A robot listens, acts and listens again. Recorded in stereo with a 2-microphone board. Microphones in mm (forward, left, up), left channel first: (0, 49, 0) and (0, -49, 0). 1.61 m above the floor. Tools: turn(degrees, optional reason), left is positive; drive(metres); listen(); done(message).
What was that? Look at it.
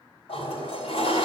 turn(degrees=90)
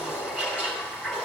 done("Facing the toilet flushing.")